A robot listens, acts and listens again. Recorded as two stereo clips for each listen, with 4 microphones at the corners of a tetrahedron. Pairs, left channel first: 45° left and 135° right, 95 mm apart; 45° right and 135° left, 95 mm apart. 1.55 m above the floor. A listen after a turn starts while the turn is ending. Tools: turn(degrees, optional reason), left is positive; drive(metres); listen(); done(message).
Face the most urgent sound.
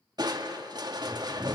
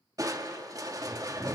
listen()
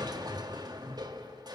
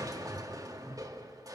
listen()
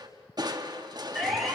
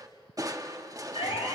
turn(degrees=-45, reason="The siren: 45° right.")
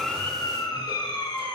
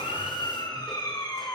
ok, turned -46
done("Found it: a siren, straight ahead, 2 to 4 m away.")